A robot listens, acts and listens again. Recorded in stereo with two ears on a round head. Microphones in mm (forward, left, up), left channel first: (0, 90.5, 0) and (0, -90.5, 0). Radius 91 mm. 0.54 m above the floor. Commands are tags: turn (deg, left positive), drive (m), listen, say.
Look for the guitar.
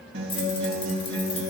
<turn deg="-70"/>
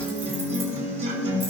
<turn deg="-40"/>
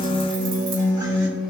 <turn deg="-20"/>
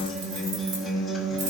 <say>Found it: a guitar, straight ahead, 2 to 4 m away.</say>